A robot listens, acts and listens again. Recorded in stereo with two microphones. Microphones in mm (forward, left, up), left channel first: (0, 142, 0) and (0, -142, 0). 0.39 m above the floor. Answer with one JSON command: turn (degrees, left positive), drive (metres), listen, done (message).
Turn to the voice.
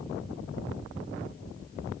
{"listen": true}
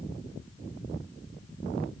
{"listen": true}
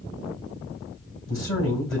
{"turn": 45}
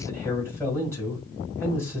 {"turn": 10}
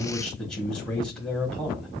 {"done": "Facing the man speaking."}